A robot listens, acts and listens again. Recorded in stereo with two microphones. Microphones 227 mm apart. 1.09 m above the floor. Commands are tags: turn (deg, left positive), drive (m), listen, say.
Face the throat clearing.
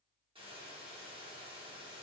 <listen/>
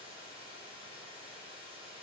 <listen/>
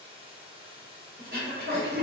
<turn deg="-45"/>
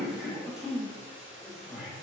<say>Found it: throat clearing, straight ahead, under 1 m away.</say>